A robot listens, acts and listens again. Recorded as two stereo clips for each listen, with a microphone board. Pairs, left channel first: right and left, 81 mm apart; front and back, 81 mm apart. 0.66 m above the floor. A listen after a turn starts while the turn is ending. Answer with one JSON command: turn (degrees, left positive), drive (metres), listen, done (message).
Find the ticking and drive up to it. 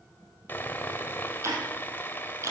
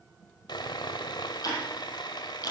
{"turn": 35}
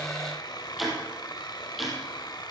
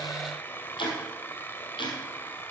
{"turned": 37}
{"drive": 1.0}
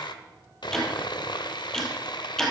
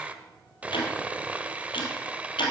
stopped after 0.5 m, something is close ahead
{"done": "Blocked. The ticking is further on, straight ahead."}